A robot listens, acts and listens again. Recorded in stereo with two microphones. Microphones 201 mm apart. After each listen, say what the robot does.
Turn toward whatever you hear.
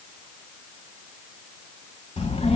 Turn 35° left.
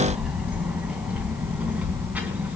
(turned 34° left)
Facing the child speaking.